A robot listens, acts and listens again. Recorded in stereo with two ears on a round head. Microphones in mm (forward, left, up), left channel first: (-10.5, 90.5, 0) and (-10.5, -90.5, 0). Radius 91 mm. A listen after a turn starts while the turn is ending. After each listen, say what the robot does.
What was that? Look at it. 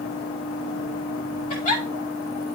Turn 35° left.
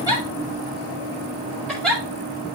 Found it: a giggle, straight ahead.